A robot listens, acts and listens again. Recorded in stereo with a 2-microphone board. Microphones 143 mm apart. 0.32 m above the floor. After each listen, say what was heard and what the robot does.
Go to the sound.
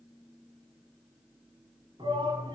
The shout: about 35° right or 145° right. Turn 35° right.
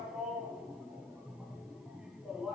Drive 1.0 m forward.
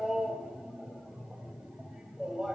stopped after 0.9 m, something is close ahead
Arrived at the shout, straight ahead.